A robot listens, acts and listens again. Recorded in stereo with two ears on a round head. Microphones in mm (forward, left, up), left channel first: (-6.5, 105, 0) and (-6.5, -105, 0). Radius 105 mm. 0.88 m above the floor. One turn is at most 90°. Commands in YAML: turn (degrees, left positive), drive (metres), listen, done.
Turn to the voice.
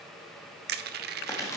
listen: true
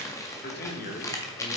turn: 35
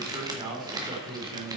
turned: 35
turn: -25
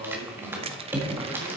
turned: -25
turn: -20
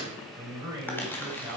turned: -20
turn: -15
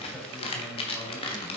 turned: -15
listen: true
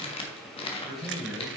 done: "Facing the man speaking, 2 to 4 m away."